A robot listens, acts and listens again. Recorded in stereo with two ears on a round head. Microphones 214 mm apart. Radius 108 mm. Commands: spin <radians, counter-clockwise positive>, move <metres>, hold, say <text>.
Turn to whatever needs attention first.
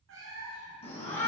spin 0.44
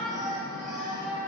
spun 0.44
say Found it: a shout, straight ahead.